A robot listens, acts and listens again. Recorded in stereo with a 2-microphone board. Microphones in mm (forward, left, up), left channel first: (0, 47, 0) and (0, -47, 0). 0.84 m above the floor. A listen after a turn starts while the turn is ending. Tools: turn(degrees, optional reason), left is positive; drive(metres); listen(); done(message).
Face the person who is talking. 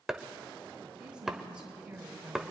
turn(degrees=-30)
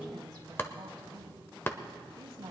turn(degrees=-135, reason="So it is at 135° right.")
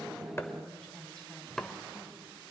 turn(degrees=10, reason="The woman speaking is now 10° left.")
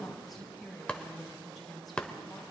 done("Found it: a woman speaking, straight ahead.")